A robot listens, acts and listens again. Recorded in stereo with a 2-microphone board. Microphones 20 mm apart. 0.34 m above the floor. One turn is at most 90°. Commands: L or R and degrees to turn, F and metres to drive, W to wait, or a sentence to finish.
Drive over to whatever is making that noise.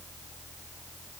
W
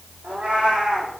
R90
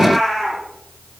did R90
L10
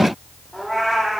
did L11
F1.0
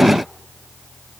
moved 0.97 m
W
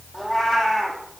F1.0
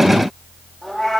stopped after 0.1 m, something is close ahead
Blocked. The cat meowing is further on, straight ahead.